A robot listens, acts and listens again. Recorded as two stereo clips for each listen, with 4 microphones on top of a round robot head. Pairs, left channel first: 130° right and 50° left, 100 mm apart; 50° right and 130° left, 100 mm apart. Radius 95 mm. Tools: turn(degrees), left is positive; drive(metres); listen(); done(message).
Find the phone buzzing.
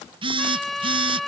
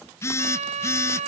turn(degrees=15)
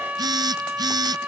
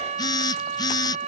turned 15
done("Facing the phone buzzing.")